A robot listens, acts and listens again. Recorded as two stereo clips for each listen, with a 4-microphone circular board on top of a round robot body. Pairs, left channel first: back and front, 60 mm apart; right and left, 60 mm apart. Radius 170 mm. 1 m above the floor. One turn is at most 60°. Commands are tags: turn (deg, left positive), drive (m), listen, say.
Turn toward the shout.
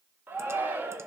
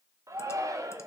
<turn deg="60"/>
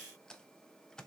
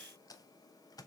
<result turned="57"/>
<listen/>
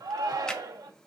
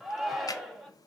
<say>Facing the shout.</say>